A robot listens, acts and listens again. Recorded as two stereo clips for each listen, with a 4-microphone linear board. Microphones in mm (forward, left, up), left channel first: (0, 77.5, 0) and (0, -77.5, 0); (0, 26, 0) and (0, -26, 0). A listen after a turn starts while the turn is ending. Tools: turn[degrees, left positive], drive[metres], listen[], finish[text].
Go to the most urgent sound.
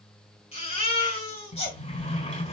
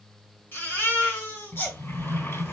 Thought: The baby crying: about 40° left or 140° left.
Action: turn[40]
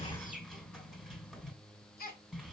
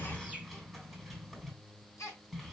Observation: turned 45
Thought: So it is at 90° left.
Action: turn[90]
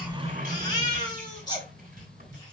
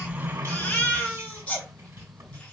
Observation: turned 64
Thought: The baby crying is now 25° left.
Action: turn[25]
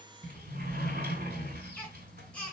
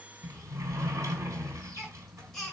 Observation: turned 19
Thought: The baby crying is now 10° left.
Action: turn[10]
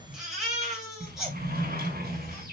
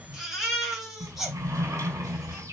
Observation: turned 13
Action: drive[1.0]
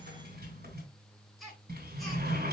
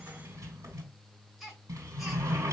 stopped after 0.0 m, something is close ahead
Action: finish[Something is in my way. I am facing the baby crying but have not reached it.]